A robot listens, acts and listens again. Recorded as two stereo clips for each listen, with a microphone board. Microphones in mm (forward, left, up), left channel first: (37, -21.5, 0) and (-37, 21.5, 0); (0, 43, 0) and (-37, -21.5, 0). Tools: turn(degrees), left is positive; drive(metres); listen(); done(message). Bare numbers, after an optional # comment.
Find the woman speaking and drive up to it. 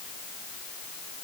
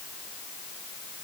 listen()
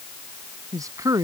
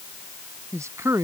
# The woman speaking: 165° right.
turn(-165)
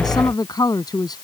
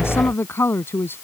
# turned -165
drive(1.0)
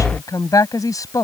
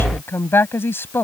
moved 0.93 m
drive(1.0)
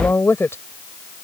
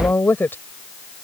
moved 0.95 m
# The woman speaking is now 15° left.
turn(15)
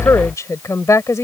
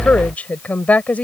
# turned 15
drive(1.0)
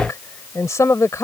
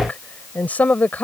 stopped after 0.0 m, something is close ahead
done("I am next to the woman speaking.")